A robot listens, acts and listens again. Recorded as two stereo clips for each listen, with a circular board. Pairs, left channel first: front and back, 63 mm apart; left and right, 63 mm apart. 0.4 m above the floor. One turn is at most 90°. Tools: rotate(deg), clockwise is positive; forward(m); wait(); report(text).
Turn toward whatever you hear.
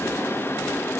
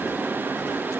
wait()
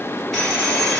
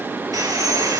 rotate(90)
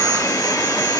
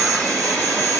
report("Found it: sawing, straight ahead.")